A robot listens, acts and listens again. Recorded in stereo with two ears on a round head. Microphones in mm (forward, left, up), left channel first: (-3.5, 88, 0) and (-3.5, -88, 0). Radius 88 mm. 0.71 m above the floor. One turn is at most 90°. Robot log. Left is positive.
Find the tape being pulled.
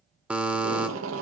cmd yaw -90
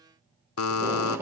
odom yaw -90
note: So it is at 10° right.
cmd yaw -10
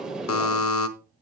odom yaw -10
end: Facing the tape being pulled, 1 to 2 m away.